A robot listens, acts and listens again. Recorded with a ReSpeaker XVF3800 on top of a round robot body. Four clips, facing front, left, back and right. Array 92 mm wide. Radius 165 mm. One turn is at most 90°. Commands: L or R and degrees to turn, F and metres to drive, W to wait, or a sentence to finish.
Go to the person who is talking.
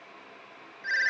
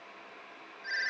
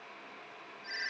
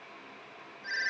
W
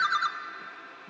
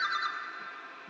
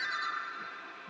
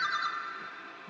W
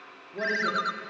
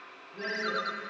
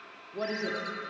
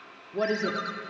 R85
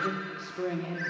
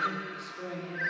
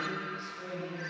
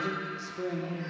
R20
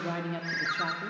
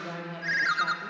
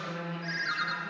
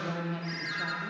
F1.0
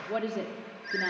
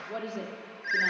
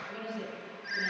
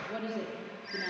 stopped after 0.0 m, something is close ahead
L10
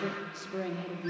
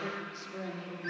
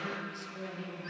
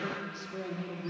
Something is in my way. I am facing the woman speaking but have not reached it.